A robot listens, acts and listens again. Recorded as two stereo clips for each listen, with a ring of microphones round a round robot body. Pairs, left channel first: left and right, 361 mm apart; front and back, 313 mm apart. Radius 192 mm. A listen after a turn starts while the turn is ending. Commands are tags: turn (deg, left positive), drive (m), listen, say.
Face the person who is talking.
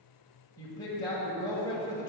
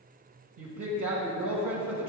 <turn deg="170"/>
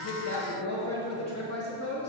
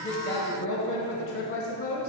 <turn deg="45"/>
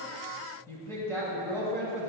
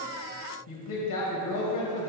<turn deg="10"/>
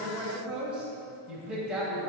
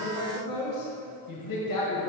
<say>Facing the woman speaking.</say>